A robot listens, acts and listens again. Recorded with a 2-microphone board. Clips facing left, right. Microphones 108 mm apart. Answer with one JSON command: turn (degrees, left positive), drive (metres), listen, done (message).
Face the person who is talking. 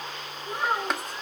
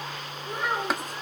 {"turn": 30}
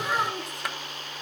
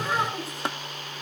{"done": "Facing the child speaking, over 4 m away."}